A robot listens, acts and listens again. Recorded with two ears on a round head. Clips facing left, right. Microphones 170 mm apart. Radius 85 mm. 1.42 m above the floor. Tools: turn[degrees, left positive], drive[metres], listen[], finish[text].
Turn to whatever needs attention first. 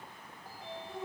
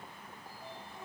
Action: listen[]
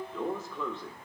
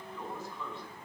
Action: listen[]
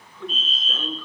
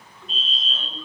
Thought: The fire alarm: about 40° left or 140° left.
Action: turn[40]
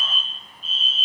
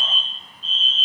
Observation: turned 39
Thought: So it is at 10° left.
Action: turn[10]
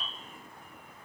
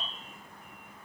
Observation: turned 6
Action: finish[Found it: a fire alarm, straight ahead.]